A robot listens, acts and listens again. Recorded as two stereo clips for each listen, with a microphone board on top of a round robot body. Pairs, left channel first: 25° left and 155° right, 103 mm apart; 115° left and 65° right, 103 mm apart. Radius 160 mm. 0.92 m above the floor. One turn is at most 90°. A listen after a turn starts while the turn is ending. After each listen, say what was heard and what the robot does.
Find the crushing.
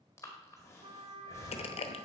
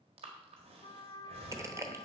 Found it: crushing, straight ahead, 1 to 2 m away.